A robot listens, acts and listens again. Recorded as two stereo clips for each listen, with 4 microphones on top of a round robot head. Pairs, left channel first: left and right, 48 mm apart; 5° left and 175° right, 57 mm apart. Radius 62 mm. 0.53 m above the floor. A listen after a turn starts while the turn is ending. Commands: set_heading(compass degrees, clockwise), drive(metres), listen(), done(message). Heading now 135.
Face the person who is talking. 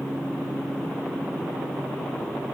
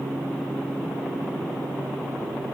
listen()
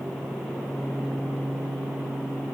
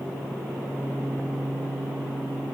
listen()
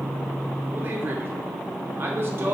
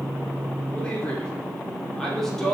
set_heading(210)
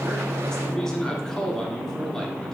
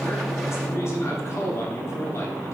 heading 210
set_heading(195)
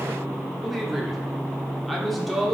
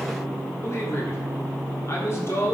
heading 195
done("Found it: a man speaking, straight ahead.")